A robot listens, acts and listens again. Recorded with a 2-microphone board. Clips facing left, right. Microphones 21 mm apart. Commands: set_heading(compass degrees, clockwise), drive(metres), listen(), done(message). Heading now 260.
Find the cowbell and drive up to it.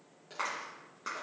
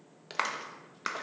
listen()
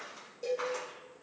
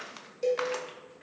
set_heading(295)
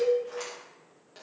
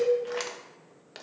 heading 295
drive(1.0)
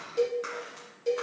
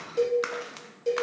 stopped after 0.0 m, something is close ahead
done("Something is in my way. I am facing the cowbell but have not reached it.")